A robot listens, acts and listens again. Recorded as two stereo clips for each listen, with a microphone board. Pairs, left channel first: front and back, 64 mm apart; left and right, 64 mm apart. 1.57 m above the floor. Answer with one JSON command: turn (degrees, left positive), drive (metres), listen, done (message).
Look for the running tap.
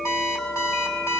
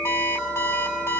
{"listen": true}
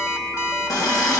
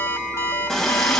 {"done": "Facing the running tap."}